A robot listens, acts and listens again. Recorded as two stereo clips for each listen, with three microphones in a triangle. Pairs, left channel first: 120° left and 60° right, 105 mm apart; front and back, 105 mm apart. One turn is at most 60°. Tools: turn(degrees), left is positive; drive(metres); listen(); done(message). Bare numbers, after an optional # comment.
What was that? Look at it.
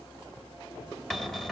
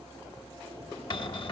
# The cupboard door: 35° left.
turn(35)
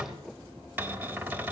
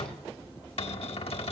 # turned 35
# The cupboard door is now 15° left.
turn(15)
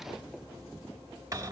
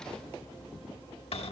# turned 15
done("Facing the cupboard door, under 1 m away.")